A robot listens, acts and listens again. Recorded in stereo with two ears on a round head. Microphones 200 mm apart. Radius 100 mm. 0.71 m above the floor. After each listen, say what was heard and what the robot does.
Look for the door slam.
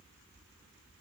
Keep listening.
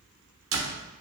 The door slam: about 70° right or 110° right. Turn 70° right.
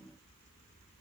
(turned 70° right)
Keep listening.
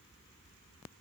I heard a door slam, but can't make it out now. It was about straight ahead or 40° right.